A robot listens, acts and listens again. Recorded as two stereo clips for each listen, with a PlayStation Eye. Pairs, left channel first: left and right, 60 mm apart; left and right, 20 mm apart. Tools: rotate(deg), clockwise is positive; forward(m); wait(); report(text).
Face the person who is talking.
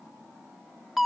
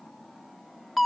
wait()
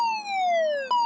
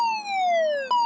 wait()
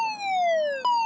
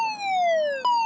report("I can't make out anyone speaking to turn to.")